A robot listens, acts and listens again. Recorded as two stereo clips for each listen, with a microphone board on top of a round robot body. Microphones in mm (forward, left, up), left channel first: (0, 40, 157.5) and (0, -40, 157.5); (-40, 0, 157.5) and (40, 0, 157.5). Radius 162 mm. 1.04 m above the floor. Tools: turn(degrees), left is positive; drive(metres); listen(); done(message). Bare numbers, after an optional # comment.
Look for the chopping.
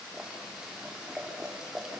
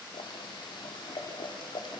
listen()
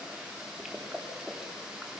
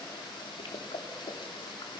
listen()
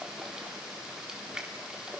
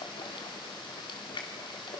done("I can't make out chopping, only boiling.")